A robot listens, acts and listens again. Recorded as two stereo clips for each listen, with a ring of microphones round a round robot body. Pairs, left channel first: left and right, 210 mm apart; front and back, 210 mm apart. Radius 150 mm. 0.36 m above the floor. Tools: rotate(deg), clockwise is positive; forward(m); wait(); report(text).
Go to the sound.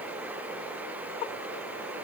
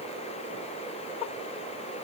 wait()
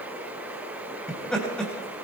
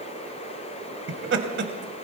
rotate(-175)
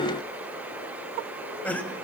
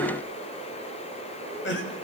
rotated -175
rotate(-10)
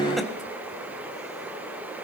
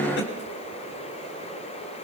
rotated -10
wait()
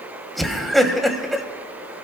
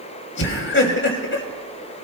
forward(1.0)
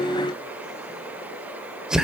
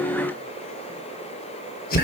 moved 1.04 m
forward(1.0)
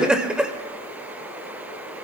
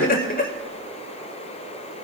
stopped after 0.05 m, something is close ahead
report("Arrived at the laughter, straight ahead.")